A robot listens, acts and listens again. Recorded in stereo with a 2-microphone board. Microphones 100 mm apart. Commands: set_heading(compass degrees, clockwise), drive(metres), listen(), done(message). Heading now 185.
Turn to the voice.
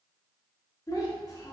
set_heading(150)
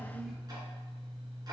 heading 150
listen()
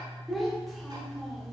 done("Found it: a child speaking, straight ahead.")